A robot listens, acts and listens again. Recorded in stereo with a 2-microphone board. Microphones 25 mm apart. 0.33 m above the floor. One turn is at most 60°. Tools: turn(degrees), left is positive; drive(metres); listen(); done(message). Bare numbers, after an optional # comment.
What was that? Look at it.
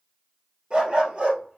# The dog barking: about 45° right or 135° right.
turn(-45)
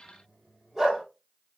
# So it is at 10° right.
turn(-10)
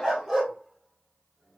# The dog barking is now 10° right.
turn(-10)
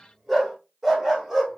# The dog barking is now 10° right.
turn(-10)
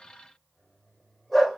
done("Facing the dog barking.")